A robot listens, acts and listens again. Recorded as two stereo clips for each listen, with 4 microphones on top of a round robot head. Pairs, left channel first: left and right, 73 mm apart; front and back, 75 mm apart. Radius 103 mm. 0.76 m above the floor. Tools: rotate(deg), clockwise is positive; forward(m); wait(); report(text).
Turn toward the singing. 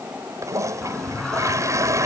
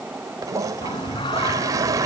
report("Found it: singing, straight ahead.")